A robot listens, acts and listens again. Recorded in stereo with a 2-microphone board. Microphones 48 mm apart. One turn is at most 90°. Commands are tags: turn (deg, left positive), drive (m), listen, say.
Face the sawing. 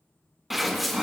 <turn deg="-30"/>
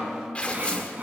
<turn deg="-90"/>
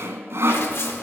<turn deg="-75"/>
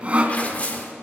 <turn deg="-30"/>
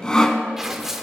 <turn deg="15"/>
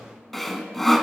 <say>Found it: sawing, straight ahead.</say>